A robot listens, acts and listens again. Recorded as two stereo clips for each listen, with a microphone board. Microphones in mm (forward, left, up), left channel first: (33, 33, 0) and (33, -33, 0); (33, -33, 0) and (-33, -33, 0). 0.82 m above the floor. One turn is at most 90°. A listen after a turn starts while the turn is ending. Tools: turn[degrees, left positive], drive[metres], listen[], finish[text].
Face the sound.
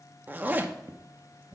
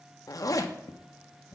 Thought: The zipper: 25° right.
Action: turn[-25]
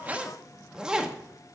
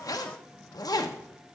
Thought: The zipper is now 10° right.
Action: turn[-10]
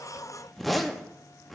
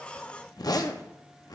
Action: finish[Facing the zipper.]